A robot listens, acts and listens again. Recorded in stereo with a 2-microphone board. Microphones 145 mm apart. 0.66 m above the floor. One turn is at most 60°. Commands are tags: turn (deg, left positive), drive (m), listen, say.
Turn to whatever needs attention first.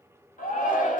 <turn deg="60"/>
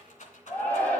<turn deg="10"/>
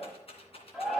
<say>Found it: a shout, straight ahead, 2 to 4 m away.</say>